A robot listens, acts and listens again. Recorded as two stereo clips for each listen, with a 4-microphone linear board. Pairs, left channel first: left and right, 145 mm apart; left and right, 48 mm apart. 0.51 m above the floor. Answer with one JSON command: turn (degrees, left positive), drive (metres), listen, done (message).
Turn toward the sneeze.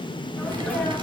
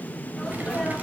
{"turn": 30}
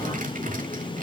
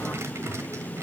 {"listen": true}
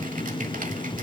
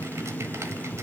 {"done": "I heard a sneeze, but can't make it out now. It was about 20° right or 140° left."}